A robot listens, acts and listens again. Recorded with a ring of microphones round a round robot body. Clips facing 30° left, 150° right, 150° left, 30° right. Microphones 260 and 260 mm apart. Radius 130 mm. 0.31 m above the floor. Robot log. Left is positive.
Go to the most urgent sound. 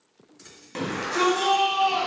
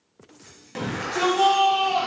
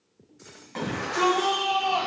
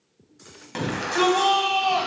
note: The shout: 50° right.
cmd yaw -50
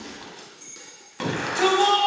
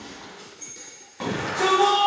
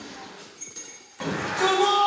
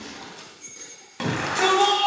cmd fwd 1.0
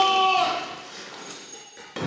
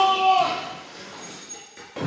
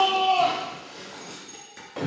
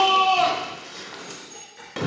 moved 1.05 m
cmd fwd 1.0
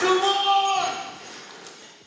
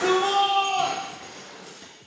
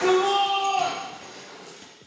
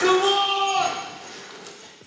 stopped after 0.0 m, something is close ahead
end: Arrived at the shout, straight ahead.